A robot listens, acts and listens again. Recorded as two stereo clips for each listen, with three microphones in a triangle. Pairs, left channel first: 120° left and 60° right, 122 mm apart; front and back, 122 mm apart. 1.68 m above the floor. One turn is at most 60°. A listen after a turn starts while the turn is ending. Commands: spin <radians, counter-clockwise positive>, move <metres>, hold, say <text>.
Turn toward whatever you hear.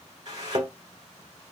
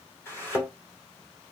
spin -1.05
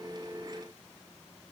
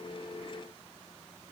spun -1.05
say I heard a thud from this way, but can't make it out now.